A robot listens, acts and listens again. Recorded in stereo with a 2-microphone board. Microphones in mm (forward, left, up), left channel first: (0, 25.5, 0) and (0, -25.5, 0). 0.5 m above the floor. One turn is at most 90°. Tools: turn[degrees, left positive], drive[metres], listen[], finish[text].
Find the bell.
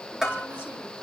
Action: turn[-30]
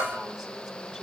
Thought: So it is at 145° right.
Action: turn[-90]
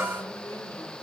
Thought: The bell is now 55° right.
Action: turn[-55]
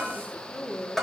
Action: finish[Facing the bell.]